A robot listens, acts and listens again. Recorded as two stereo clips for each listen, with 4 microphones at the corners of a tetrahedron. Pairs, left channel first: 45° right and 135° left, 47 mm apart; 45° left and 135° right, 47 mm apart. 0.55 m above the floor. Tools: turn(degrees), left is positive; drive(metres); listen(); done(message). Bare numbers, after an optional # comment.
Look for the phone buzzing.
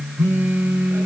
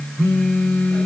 # The phone buzzing: 100° left.
turn(100)
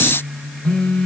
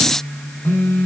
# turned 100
# The phone buzzing is now 20° left.
turn(20)
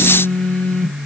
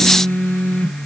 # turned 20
done("Facing the phone buzzing.")